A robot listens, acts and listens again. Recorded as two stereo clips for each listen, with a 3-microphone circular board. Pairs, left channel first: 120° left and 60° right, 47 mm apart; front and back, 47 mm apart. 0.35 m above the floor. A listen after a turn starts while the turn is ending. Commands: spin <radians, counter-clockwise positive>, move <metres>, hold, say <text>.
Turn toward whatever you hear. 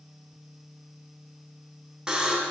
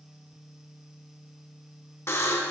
spin 0.26
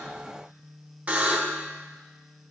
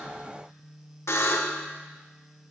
say Found it: a buzzer, straight ahead.